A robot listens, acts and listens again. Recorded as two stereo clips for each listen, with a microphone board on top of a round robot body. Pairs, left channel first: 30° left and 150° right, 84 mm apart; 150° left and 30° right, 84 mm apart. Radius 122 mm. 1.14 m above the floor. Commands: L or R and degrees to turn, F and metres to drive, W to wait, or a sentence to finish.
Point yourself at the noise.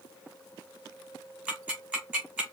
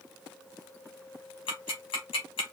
L135
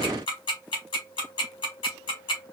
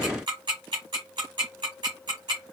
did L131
Found it: ticking, straight ahead.